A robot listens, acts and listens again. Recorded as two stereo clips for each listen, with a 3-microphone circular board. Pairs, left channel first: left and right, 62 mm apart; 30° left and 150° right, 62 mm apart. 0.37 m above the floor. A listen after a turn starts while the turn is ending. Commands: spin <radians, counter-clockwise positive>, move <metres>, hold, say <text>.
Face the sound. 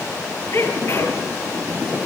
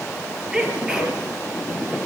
spin 2.27
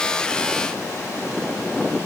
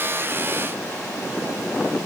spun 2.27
say Facing where the sneeze came from. I can't hear it now.